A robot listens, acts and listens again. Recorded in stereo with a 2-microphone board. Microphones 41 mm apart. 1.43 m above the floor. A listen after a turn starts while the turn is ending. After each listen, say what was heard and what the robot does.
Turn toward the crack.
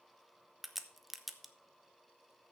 Turn 30° left.
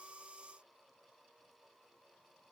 Keep listening.
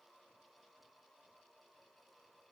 I heard a crack, but can't make it out now. It was about 30° right or 150° left.